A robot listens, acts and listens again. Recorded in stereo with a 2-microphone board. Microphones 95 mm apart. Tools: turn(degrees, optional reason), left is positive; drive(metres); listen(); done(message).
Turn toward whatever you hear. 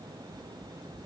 listen()
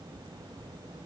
listen()
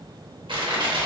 turn(degrees=-60, reason="The crushing: about 60° right or 120° right.")
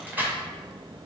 turn(degrees=-20, reason="So it is at 20° right.")
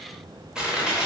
turn(degrees=-10, reason="The crushing is now 10° right.")
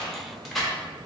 done("Found it: crushing, straight ahead, under 1 m away.")